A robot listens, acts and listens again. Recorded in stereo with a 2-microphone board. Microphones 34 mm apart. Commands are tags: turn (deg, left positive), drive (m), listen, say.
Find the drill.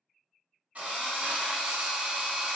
<turn deg="-50"/>
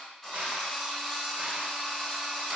<say>Facing the drill, 1 to 2 m away.</say>